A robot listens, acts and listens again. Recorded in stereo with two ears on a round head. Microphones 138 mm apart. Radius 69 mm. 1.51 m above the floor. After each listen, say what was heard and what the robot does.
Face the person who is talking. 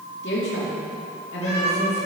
Turn 90° left.
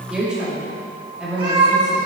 Facing the woman speaking.